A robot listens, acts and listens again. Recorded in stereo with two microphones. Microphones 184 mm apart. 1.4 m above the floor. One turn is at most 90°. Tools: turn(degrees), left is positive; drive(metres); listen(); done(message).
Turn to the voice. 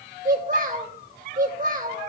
turn(degrees=-45)
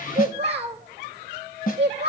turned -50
turn(degrees=-80)
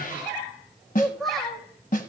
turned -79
done("Found it: a child speaking, straight ahead.")